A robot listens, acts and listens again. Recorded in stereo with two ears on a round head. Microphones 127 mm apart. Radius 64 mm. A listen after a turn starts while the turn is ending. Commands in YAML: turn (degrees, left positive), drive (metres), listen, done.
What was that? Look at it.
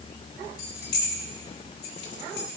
turn: 90
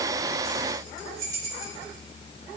turn: -25
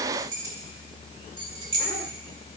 turn: -35
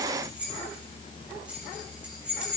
turn: -10
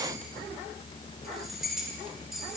done: "Facing the keys jangling, 2 to 4 m away."